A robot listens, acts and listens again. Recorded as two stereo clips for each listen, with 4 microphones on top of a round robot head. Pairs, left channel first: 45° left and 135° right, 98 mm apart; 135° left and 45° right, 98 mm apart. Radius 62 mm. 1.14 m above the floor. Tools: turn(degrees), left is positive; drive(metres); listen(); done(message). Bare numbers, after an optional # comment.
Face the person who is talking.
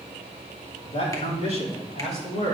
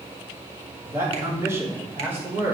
# The man speaking: 25° left.
turn(25)
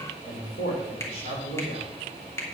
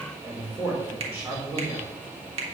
# The man speaking is now 25° left.
turn(25)
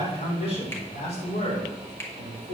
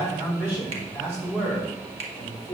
# The man speaking is now 30° left.
turn(30)
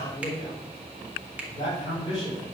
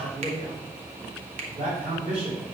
done("Facing the man speaking.")